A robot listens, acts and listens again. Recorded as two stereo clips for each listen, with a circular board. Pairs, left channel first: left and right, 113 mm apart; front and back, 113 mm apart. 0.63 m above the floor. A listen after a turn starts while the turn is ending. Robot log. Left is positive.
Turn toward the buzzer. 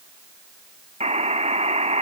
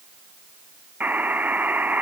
note: The buzzer: 105° right.
cmd yaw -105
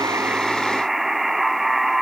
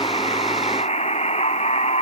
end: Found it: a buzzer, straight ahead.